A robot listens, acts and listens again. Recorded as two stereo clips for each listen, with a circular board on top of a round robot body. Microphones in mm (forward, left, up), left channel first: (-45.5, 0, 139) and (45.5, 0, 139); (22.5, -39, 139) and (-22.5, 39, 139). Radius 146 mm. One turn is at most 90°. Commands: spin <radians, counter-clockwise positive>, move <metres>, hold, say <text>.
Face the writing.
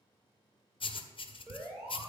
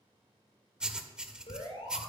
spin -1.57
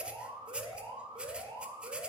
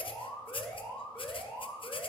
spin -1.40
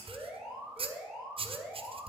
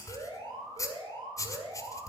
say Facing the writing, 1 to 2 m away.